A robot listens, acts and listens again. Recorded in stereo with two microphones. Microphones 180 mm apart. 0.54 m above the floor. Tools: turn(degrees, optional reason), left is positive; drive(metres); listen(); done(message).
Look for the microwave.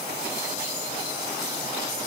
listen()
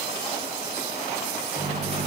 turn(degrees=-35, reason="The microwave: about 35° right or 145° right.")
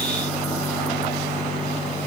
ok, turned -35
done("Found it: a microwave, straight ahead, over 4 m away.")